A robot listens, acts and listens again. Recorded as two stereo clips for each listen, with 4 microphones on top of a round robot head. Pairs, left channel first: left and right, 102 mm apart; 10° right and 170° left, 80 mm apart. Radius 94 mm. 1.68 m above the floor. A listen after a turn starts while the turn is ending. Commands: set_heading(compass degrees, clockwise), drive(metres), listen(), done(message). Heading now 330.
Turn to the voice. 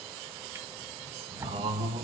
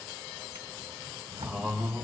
set_heading(60)
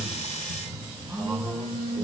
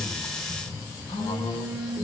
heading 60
done("Found it: a man speaking, straight ahead, 2 to 4 m away.")